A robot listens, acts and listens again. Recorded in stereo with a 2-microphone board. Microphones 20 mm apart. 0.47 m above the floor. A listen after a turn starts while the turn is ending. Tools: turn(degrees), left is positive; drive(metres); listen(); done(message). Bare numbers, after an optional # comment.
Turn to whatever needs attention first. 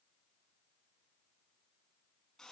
listen()
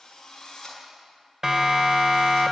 # The siren: about 30° right or 150° right.
turn(-30)
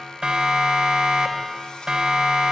# So it is at 115° right.
turn(-115)
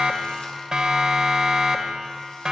# The siren is now 40° right.
turn(-40)
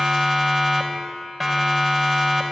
done("Found it: a siren, straight ahead, 2 to 4 m away.")